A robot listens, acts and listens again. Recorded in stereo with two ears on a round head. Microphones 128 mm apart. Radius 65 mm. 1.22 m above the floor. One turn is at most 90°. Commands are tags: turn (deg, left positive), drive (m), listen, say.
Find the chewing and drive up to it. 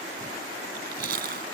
<turn deg="-65"/>
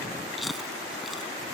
<drive m="1.0"/>
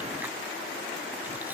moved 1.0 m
<turn deg="-10"/>
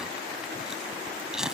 <drive m="1.0"/>
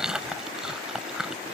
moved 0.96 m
<drive m="1.0"/>
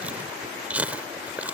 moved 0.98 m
<turn deg="-10"/>
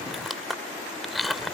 <drive m="1.0"/>
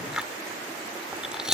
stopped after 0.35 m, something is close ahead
<say>Arrived at the chewing, straight ahead.</say>